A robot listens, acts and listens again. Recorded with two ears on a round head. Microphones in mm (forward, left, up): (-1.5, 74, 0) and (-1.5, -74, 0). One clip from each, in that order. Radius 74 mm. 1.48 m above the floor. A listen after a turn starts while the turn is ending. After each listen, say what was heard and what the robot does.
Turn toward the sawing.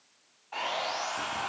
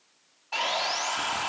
The sawing: about 75° right or 105° right. Turn 75° right.
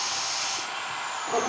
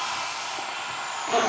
Facing the sawing, 2 to 4 m away.